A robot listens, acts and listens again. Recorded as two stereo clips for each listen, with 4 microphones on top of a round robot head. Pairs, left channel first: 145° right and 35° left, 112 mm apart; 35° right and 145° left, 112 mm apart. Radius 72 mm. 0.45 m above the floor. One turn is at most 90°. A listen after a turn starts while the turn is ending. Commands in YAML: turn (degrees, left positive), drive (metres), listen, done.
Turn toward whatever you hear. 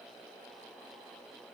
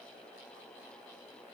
listen: true
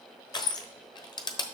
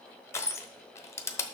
turn: -90
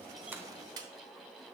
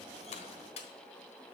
turn: -15
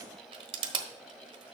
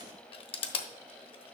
done: "Found it: crushing, straight ahead, 1 to 2 m away."